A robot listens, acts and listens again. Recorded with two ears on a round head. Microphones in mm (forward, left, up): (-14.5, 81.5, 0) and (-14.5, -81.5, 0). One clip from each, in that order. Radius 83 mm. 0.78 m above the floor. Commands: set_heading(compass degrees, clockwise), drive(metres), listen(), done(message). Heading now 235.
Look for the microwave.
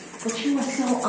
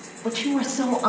listen()
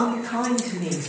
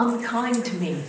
listen()
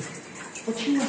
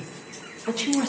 done("I can't make out a microwave, only a woman speaking.")